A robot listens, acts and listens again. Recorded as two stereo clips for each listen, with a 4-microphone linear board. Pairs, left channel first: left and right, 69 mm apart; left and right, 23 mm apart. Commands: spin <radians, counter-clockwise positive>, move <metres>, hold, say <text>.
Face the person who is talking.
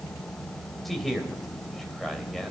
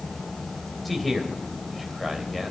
spin 0.52
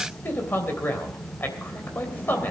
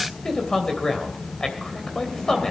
spin 2.62
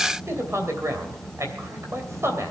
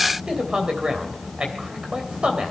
spin -0.79
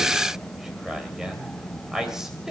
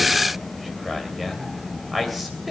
spin -0.17
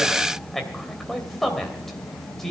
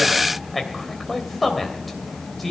say Found it: a man speaking, straight ahead.